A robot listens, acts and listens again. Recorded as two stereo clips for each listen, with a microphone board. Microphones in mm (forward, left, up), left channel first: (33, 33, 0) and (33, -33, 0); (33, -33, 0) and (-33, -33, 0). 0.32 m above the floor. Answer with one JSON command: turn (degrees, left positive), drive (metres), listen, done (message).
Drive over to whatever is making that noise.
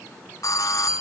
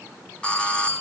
{"turn": 70}
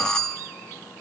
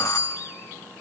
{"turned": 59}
{"turn": 10}
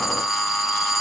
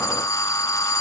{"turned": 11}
{"drive": 1.0}
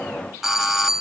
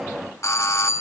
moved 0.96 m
{"drive": 1.0}
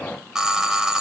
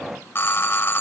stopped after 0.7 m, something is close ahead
{"turn": -15}
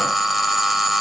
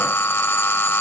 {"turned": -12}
{"done": "Arrived at the doorbell, straight ahead."}